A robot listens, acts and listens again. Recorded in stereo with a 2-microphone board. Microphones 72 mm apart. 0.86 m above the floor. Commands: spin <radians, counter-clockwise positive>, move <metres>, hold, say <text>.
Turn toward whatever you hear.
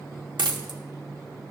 spin -1.57
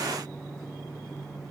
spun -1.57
say Facing where the dropped coin came from. I can't hear it now.